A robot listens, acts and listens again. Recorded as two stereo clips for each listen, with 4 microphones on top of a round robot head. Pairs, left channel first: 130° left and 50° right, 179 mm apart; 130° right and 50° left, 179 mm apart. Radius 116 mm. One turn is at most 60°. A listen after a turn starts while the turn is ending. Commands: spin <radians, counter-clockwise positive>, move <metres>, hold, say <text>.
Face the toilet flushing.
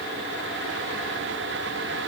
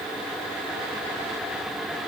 hold
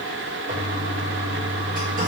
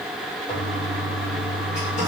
spin -1.05
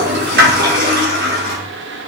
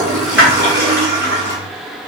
spin -0.52
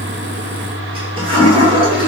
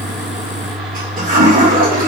spin 0.17
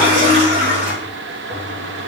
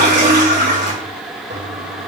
say Found it: a toilet flushing, straight ahead, 1 to 2 m away.